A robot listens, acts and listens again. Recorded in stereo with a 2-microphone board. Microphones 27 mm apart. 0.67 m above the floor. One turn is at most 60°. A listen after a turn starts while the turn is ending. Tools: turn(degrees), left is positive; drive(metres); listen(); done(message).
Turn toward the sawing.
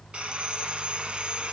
turn(degrees=-40)
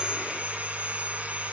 turn(degrees=-60)
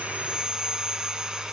turn(degrees=-35)
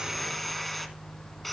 done("Found it: sawing, straight ahead.")